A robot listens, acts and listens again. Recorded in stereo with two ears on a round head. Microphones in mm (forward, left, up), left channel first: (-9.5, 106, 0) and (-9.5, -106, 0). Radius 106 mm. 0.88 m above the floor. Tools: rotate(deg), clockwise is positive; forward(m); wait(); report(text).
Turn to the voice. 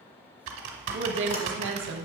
rotate(55)
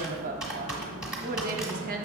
rotate(45)
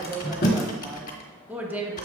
rotate(10)
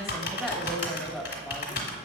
report("Facing the woman speaking, 1 to 2 m away.")